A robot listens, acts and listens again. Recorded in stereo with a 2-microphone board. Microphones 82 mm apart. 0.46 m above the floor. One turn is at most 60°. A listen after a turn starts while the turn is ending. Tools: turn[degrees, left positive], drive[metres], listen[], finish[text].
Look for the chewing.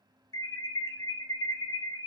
Action: listen[]
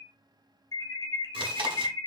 Action: turn[-60]
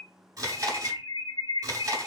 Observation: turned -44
Thought: So it is at 45° right.
Action: turn[-45]
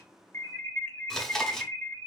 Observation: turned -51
Action: finish[Found it: chewing, straight ahead.]